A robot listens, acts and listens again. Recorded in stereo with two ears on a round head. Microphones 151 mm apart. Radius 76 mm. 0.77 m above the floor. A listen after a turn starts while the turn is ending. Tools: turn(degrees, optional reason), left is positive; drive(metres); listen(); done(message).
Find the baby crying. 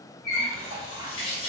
listen()
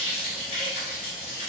listen()
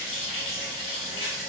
done("I can't make out a baby crying to turn to.")